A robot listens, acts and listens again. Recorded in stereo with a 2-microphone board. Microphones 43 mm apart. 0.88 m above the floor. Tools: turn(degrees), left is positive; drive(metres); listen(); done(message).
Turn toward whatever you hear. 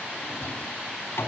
turn(degrees=90)
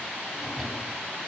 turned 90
done("Found it: a drawer, straight ahead.")